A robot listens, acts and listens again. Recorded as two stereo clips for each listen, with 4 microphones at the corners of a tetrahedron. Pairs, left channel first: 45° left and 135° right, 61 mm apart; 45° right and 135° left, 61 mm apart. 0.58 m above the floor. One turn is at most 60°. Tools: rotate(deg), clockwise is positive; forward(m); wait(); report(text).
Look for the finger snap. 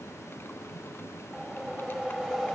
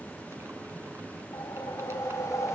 wait()
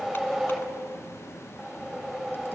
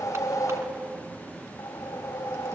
wait()
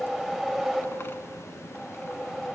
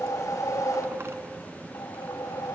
report("I can't make out a finger snap, only a whoosh.")